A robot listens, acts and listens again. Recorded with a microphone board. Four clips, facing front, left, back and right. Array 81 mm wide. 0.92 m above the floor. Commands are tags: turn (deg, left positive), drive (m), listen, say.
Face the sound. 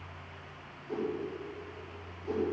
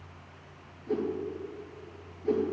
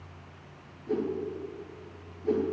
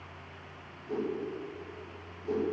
<turn deg="140"/>
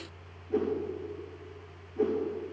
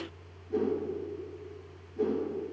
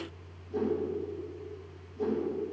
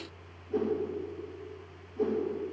<turn deg="10"/>
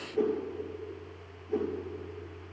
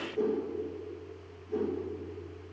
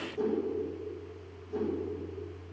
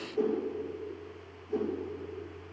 <say>Found it: a whoosh, straight ahead, over 4 m away.</say>